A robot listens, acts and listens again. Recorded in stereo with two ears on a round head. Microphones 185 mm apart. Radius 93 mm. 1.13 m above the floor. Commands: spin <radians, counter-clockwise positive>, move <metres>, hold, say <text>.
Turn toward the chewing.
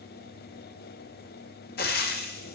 hold
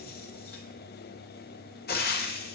hold
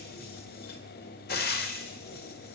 say I can't make out chewing, only frying.